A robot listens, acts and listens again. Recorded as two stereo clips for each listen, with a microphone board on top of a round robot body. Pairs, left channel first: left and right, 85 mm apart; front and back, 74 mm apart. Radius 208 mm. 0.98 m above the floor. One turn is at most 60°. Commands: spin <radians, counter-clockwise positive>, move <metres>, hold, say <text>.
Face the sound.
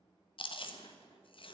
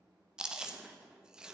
spin 1.05
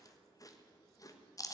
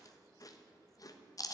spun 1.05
spin 0.70
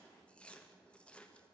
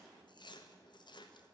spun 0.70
spin 0.26
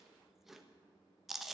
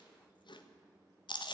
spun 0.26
say Found it: chewing, straight ahead.